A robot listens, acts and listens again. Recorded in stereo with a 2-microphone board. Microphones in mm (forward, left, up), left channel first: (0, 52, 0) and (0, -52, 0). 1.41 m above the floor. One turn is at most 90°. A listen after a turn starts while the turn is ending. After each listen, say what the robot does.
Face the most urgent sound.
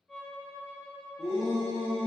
Turn 70° left.
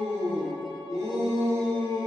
Turn 35° left.
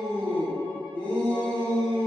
Turn 15° left.
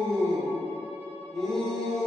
Found it: a shout, straight ahead.